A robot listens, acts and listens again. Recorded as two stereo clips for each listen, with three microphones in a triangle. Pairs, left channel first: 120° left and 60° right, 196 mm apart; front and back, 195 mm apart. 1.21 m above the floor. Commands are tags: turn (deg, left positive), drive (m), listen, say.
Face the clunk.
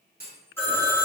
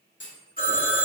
<turn deg="-20"/>
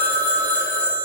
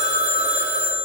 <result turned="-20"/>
<say>Facing where the clunk came from. I can't hear it now.</say>